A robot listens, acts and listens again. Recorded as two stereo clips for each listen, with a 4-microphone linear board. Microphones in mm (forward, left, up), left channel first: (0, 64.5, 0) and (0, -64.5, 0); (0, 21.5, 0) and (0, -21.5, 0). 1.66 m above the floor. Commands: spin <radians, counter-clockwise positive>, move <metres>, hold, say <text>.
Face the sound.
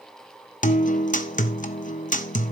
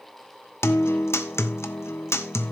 spin 1.57
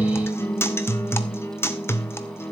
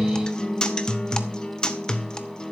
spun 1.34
spin 0.35
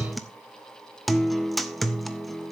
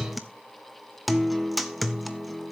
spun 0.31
say Facing the guitar.